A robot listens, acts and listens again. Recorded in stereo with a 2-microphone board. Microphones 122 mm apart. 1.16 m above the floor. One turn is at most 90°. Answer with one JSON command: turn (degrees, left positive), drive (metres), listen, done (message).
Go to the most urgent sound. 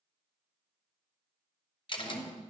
{"turn": -55}
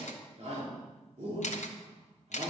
{"turn": -70}
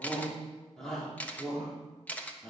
{"drive": 1.0}
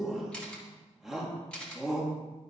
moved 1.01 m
{"drive": 1.0}
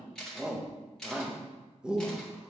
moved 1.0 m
{"turn": -10}
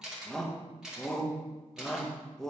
{"drive": 1.0}
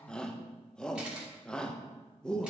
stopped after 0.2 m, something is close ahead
{"done": "I am next to the shout."}